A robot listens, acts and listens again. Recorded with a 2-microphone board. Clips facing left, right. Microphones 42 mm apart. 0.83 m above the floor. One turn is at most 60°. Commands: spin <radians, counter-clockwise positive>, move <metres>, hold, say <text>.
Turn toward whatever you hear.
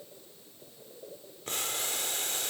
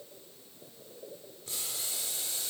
spin 0.96
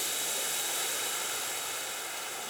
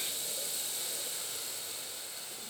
spin 1.05
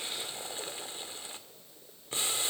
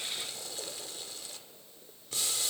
spin 0.52
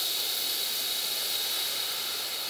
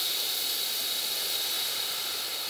say Facing the boiling, 1 to 2 m away.